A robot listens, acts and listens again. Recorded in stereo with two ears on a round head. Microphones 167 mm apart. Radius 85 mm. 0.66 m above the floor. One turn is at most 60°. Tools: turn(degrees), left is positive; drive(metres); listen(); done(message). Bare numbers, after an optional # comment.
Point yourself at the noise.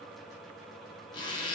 # The zipper: about 25° left or 155° left.
turn(25)
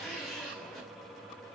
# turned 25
done("Facing the zipper.")